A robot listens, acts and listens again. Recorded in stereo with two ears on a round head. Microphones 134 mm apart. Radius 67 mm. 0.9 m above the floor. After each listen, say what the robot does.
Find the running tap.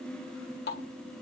Turn 75° left.
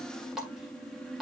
Found it: a running tap, straight ahead.